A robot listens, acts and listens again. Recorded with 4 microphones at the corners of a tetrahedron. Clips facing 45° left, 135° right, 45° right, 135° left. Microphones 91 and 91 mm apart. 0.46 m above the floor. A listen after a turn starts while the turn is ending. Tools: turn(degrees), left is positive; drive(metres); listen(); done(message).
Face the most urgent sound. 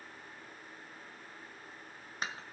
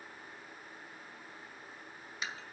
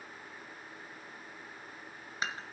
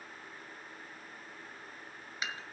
listen()
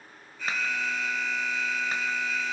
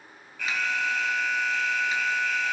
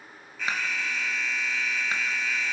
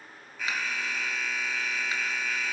turn(degrees=-140)
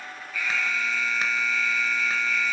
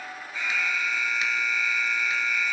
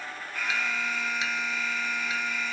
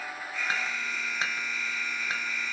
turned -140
turn(degrees=-50)
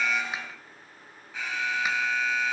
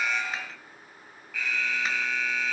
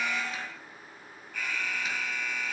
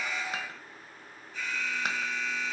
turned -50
turn(degrees=-20)
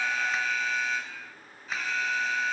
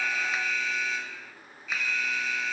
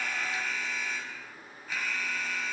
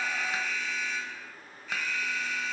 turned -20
done("Found it: an alarm, straight ahead, over 4 m away.")